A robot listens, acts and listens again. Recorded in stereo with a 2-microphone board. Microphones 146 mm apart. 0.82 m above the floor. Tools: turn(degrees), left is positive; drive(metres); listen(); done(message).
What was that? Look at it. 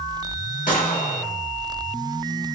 turn(degrees=65)
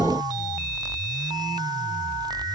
listen()
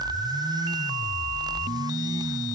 done("I heard a gunshot, but can't make it out now. It was about straight ahead or 50° left.")